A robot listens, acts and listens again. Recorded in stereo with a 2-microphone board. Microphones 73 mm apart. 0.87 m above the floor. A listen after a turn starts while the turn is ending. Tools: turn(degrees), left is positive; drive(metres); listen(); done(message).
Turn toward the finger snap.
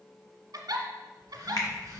turn(degrees=60)
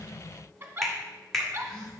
done("Found it: a finger snap, straight ahead.")